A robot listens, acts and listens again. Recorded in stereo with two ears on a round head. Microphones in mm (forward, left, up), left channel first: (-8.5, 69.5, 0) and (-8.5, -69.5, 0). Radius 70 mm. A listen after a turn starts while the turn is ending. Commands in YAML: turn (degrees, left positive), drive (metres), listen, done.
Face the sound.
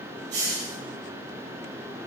turn: -90
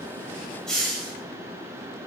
done: "Facing the hiss."